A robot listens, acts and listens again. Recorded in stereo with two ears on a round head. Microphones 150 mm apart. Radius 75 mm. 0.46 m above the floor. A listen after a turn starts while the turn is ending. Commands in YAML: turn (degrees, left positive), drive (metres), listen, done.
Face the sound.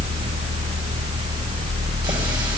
listen: true
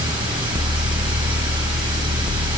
listen: true
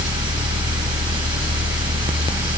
done: "I can't make out anything."